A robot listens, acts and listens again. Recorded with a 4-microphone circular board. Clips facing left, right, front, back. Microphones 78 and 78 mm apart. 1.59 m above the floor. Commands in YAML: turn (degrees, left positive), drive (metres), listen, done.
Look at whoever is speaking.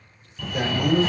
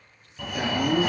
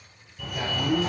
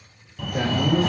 turn: 150
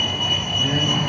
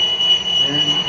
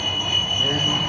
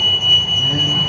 listen: true
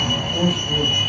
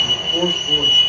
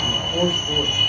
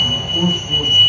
turn: -15
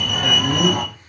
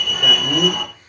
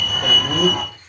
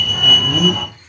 listen: true
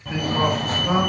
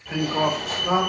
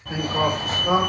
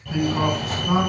done: "Facing the man speaking."